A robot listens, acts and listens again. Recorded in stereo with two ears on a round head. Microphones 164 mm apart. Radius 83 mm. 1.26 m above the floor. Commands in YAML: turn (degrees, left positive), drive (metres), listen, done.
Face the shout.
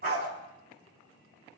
listen: true
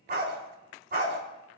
listen: true
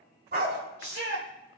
turn: -90
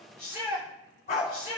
turn: -15
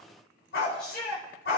done: "Facing the shout, over 4 m away."